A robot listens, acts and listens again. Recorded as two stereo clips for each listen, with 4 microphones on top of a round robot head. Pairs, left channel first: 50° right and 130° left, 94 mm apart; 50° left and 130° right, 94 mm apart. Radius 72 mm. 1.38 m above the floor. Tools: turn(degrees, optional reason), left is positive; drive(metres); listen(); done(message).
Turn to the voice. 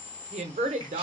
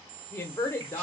turn(degrees=120, reason="The woman speaking: 120° left.")
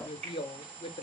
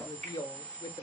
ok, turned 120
turn(degrees=-10, reason="The woman speaking is now 10° right.")
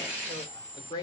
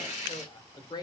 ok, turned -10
done("Found it: a woman speaking, straight ahead.")